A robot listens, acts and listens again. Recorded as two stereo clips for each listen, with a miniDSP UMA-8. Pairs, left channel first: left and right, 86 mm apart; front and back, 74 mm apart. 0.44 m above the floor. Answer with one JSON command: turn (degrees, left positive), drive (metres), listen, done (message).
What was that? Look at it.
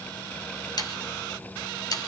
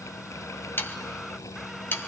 {"turn": 60}
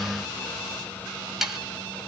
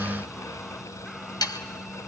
{"done": "Facing the sawing."}